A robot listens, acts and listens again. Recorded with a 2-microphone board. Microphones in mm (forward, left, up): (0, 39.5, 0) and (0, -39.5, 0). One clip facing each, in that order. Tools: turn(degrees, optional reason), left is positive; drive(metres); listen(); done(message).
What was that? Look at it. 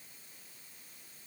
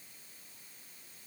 listen()
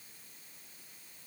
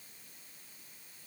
listen()
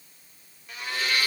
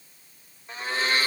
turn(degrees=-30, reason="The blender: about 30° right or 150° right.")
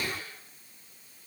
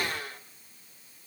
turn(degrees=-115, reason="So it is at 115° right.")
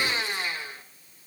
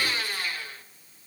turn(degrees=20, reason="The blender is now 20° left.")
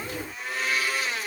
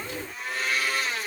done("Facing the blender, 1 to 2 m away.")